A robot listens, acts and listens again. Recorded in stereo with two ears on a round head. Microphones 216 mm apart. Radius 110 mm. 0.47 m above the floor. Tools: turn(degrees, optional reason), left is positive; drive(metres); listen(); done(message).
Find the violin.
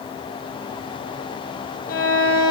turn(degrees=35, reason="The violin: about 35° left or 145° left.")
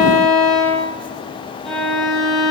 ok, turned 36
done("Facing the violin, over 4 m away.")